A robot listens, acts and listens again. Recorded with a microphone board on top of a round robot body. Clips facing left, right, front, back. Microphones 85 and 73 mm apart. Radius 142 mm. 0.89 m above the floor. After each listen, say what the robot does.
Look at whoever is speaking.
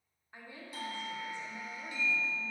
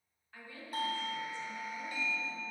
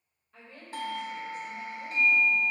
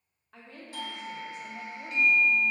Turn 165° left.
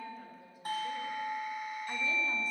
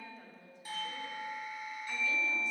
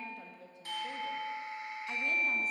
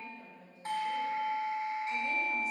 Facing the woman speaking.